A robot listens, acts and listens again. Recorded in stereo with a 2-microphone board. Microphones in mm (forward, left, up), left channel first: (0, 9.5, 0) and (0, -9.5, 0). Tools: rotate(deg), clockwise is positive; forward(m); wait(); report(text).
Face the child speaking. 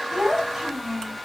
rotate(30)
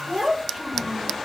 rotate(25)
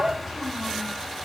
rotate(30)
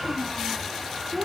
rotate(25)
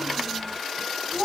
rotate(35)
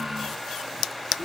rotate(115)
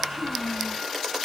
rotate(-40)
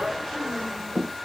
rotate(-15)
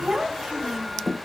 report("Found it: a child speaking, straight ahead.")